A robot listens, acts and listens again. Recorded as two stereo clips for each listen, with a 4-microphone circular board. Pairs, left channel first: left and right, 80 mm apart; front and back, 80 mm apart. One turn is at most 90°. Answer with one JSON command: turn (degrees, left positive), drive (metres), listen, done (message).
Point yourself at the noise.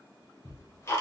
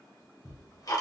{"turn": 40}
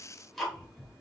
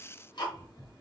{"done": "Found it: ticking, straight ahead."}